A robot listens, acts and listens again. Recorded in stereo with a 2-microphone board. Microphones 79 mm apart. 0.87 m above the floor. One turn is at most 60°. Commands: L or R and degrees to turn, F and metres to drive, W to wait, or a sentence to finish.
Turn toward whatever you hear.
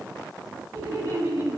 R60
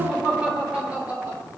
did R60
R15
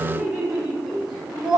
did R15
R10
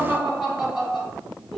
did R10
Facing the laughter, over 4 m away.